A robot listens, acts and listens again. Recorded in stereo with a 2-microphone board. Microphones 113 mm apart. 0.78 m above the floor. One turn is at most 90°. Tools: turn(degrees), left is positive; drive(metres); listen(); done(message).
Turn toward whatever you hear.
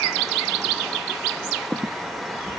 turn(degrees=-30)
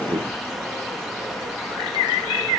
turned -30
listen()
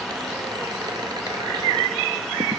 listen()
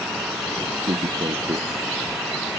turn(degrees=-90)
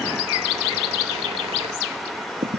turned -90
turn(degrees=-60)
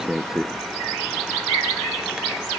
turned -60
done("Facing the squeak.")